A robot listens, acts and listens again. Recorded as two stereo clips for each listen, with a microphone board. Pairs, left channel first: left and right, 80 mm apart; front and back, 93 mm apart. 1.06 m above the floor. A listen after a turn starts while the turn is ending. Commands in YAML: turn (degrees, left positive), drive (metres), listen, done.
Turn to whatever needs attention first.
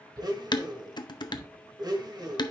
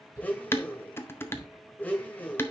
turn: -115
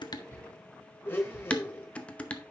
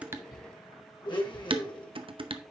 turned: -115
turn: -15
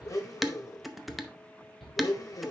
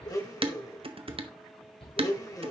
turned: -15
done: "Facing the shout."